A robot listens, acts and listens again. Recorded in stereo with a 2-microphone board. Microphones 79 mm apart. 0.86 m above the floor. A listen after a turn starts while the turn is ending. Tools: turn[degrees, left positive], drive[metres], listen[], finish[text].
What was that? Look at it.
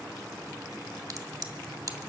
Thought: The crack: about 45° right or 135° right.
Action: turn[-45]
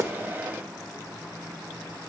Action: listen[]
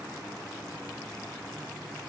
Action: finish[I heard a crack, but can't make it out now. It was about straight ahead or 90° right.]